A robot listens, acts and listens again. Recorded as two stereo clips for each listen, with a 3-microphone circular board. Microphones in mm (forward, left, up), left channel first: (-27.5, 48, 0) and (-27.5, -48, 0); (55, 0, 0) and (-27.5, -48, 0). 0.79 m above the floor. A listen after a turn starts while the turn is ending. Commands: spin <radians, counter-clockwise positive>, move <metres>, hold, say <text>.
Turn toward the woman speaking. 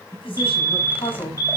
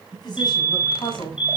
spin 1.22
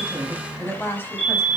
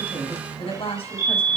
spin 0.44
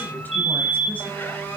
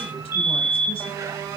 hold
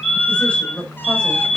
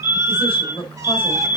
spin 0.17
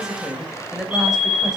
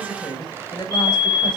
say Facing the woman speaking.